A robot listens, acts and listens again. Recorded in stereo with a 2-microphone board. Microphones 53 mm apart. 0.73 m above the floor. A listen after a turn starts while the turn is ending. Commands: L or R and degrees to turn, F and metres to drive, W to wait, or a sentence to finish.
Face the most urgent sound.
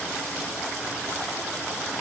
W
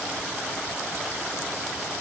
W
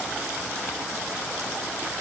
I can't make out anything urgent.